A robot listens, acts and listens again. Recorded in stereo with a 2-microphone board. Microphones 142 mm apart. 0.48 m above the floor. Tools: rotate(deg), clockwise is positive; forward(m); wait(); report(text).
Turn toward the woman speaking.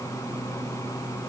wait()
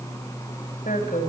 rotate(-70)
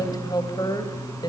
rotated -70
rotate(-30)
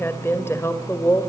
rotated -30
rotate(-20)
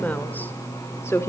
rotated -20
rotate(-20)
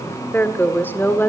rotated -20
rotate(-15)
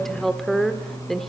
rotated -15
report("Facing the woman speaking, 1 to 2 m away.")